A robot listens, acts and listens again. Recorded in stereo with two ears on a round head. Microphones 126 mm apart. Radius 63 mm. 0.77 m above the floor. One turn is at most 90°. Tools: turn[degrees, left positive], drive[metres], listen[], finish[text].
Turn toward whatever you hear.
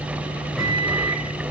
Action: turn[30]
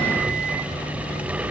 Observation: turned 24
Action: listen[]
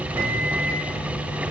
Thought: So it is at 25° right.
Action: turn[-25]
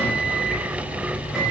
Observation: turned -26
Action: finish[Found it: a microwave, straight ahead, over 4 m away.]